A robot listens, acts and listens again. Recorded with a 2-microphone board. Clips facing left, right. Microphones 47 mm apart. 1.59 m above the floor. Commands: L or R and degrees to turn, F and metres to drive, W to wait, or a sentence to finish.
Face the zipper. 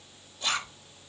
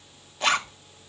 R75
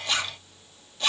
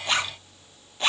R30
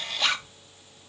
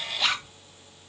Found it: a zipper, straight ahead, 1 to 2 m away.